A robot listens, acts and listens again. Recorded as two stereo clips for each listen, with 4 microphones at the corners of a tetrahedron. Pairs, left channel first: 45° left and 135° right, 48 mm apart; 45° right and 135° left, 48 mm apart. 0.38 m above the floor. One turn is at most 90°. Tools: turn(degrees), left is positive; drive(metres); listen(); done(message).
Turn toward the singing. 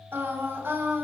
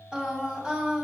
turn(degrees=-90)
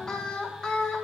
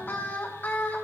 turn(degrees=-25)
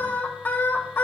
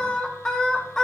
turn(degrees=25)
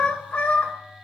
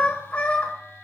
done("Facing the singing, 1 to 2 m away.")